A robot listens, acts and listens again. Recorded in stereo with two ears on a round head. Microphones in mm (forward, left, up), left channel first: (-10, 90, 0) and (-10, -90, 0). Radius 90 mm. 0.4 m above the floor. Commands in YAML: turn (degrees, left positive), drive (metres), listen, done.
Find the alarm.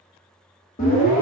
turn: 35
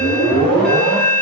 done: "Facing the alarm, 1 to 2 m away."